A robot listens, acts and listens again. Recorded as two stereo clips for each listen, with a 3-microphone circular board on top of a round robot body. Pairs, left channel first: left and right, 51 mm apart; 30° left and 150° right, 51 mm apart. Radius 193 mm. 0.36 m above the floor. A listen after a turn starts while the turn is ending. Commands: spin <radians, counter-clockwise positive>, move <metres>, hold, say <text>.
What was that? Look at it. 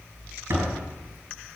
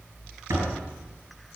spin -2.27
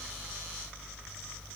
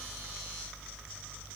say I heard a door slam from this way, but can't make it out now.